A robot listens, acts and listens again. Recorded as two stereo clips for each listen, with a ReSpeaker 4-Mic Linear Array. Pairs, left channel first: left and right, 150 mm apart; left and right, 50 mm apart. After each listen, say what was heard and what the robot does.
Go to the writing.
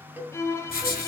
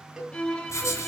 Turn 90° left.
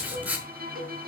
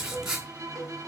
So it is at 10° right. Turn 10° right.
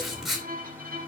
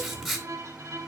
Drive 1.0 m forward.
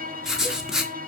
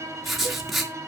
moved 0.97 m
Drive 1.0 m forward.
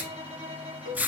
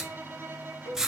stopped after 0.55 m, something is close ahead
The writing is now 10° right. Turn 10° right.
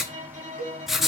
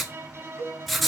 Arrived at the writing, straight ahead.